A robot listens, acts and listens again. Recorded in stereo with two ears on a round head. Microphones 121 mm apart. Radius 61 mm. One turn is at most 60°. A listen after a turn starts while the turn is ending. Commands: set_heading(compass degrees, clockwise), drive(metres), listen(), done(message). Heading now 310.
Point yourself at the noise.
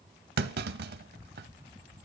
set_heading(10)
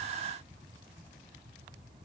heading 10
set_heading(40)
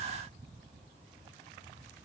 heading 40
done("I heard a clunk from this way, but can't make it out now.")